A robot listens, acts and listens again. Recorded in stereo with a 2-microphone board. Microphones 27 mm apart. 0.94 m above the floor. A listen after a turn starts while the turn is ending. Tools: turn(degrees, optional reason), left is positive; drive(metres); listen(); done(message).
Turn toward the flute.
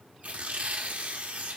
listen()
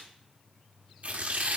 listen()
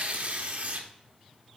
done("I can't make out a flute, only tearing paper.")